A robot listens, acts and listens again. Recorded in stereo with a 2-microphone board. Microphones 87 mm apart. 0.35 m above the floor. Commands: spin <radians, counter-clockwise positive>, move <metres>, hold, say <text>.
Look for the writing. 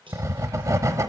spin -0.61
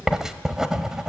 spin -0.17
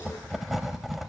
say Found it: writing, straight ahead.